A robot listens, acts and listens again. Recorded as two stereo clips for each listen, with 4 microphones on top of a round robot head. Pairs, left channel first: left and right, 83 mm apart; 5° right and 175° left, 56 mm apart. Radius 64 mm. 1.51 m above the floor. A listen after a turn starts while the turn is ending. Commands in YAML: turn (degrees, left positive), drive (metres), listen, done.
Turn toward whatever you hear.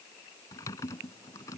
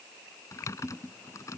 turn: 30
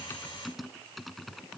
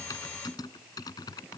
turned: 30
done: "Facing the typing on a keyboard."